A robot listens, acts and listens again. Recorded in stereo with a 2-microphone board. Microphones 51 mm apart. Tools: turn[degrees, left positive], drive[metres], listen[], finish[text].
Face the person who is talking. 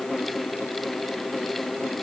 Action: listen[]
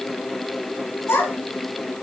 Thought: The child speaking: about 65° left or 115° left.
Action: turn[65]
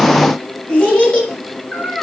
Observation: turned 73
Thought: So it is at 15° left.
Action: turn[15]
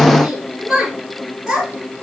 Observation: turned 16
Action: finish[Facing the child speaking, 2 to 4 m away.]